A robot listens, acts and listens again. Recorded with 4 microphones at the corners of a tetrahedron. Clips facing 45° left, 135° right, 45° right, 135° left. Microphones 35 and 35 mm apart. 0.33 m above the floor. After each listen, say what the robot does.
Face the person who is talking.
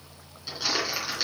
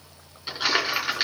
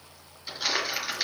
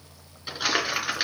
Keep listening.
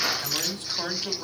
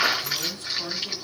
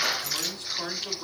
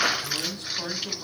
Turn 45° left.
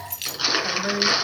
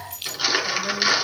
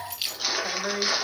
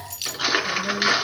Facing the man speaking.